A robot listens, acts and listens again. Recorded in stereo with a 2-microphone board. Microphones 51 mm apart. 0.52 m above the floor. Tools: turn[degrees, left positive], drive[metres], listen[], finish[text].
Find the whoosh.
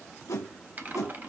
Thought: The whoosh: about 75° left or 105° left.
Action: turn[75]
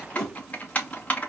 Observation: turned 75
Thought: So it is at 10° left.
Action: turn[10]
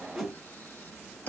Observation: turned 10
Action: finish[Found it: a whoosh, straight ahead, under 1 m away.]